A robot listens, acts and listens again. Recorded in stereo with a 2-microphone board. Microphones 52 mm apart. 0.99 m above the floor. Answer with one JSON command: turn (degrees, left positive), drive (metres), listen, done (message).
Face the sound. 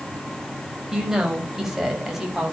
{"turn": -30}
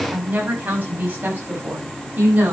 {"turn": -145}
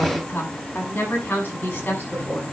{"turn": 40}
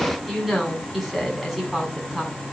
{"done": "Found it: a woman speaking, straight ahead."}